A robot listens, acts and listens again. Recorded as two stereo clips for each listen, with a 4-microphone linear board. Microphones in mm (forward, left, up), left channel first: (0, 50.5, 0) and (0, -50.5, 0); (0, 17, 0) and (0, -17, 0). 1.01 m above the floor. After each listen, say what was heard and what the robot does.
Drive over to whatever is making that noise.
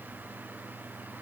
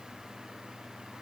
Keep listening.
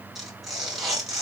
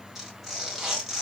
Turn 30° right.
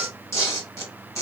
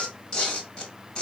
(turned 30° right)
So it is at 25° left. Turn 25° left.
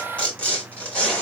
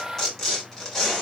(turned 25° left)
The tearing paper is now 10° left. Turn 10° left.
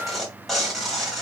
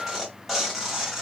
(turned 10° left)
Drive 1.0 m forward.
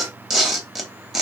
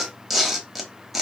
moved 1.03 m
Drive 1.0 m forward.
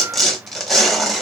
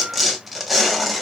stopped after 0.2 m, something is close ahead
Arrived at the tearing paper, straight ahead.